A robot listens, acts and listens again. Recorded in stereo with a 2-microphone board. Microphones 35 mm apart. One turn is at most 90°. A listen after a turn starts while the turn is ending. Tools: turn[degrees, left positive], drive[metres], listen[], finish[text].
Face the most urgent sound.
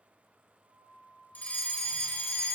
Thought: The fire alarm: about 45° left or 135° left.
Action: turn[45]
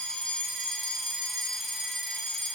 Thought: So it is at 10° left.
Action: turn[10]
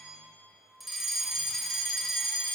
Action: finish[Facing the fire alarm, 2 to 4 m away.]